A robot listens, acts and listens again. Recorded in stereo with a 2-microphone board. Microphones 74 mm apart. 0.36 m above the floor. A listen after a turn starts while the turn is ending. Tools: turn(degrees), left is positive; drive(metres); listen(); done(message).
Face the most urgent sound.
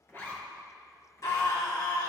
turn(degrees=55)
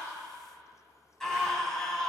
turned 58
done("Found it: a scream, straight ahead.")